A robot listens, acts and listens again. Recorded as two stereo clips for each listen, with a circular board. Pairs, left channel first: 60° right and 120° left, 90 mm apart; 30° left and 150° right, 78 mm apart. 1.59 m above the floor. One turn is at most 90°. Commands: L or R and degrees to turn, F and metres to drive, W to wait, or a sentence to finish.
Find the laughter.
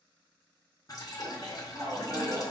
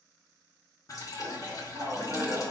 L90
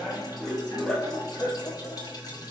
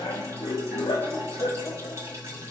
Facing the laughter.